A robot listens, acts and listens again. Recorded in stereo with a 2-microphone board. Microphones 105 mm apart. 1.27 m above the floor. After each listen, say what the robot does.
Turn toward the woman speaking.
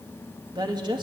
Turn 45° right.
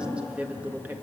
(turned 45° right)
Turn 20° right.
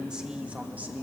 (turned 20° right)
Turn 15° right.
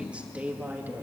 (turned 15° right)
Turn 20° right.
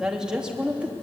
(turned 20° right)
Turn 10° right.
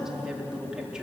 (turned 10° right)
Turn 10° right.
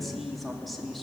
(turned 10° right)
Found it: a woman speaking, straight ahead.